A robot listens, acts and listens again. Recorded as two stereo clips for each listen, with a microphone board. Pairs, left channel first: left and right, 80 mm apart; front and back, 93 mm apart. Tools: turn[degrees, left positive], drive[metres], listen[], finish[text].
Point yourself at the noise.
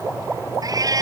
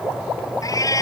Thought: The cat meowing: 50° right.
Action: turn[-50]
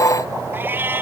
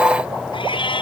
Thought: The cat meowing is now 25° right.
Action: turn[-25]
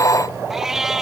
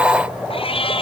Action: finish[Found it: a cat meowing, straight ahead.]